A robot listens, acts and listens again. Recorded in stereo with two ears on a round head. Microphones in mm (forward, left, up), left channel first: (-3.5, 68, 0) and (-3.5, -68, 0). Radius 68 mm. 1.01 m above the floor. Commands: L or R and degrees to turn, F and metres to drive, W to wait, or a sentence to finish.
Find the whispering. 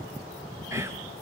R20
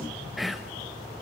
Found it: whispering, straight ahead, under 1 m away.